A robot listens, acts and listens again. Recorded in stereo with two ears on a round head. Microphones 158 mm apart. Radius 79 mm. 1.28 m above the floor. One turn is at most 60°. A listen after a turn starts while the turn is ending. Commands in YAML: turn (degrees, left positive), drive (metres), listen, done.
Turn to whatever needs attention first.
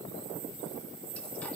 listen: true
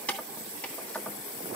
listen: true
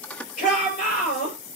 turn: 45
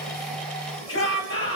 turn: 60
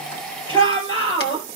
turn: 30
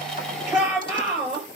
done: "Found it: a shout, straight ahead, over 4 m away."